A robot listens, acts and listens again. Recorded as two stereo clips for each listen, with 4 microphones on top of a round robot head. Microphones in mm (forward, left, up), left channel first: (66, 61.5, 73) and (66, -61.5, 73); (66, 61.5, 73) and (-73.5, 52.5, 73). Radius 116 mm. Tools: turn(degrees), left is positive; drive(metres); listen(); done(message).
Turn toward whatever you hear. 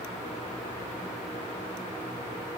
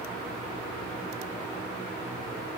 listen()
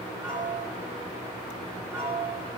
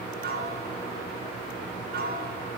turn(degrees=-170)
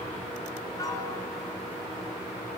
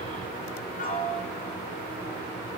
turn(degrees=30)
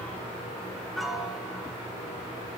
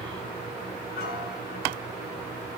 done("Found it: a piano, straight ahead, 2 to 4 m away.")